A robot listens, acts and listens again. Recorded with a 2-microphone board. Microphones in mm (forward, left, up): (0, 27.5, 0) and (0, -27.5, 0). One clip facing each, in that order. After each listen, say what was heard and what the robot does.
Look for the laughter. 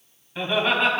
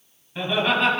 Turn 30° left.
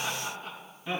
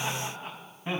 So it is at 30° right. Turn 30° right.
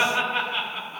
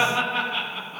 Facing the laughter, over 4 m away.